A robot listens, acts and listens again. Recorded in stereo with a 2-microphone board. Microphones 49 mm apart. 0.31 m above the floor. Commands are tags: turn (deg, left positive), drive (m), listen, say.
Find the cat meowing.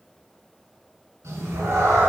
<turn deg="-90"/>
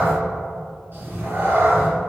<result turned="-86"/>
<turn deg="-55"/>
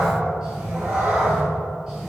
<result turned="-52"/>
<turn deg="-20"/>
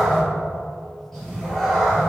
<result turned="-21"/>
<say>Facing the cat meowing, 2 to 4 m away.</say>